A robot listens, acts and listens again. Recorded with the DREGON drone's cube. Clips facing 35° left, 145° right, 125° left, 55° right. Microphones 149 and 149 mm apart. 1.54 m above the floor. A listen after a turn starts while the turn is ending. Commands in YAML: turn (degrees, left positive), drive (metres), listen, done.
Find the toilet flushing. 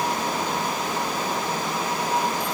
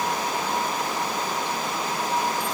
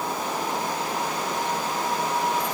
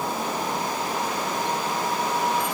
listen: true
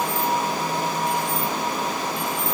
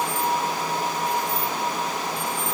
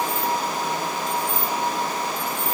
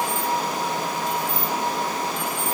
listen: true
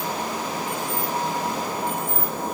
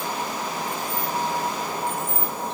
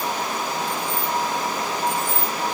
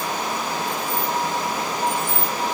done: "I can't make out a toilet flushing, only keys jangling."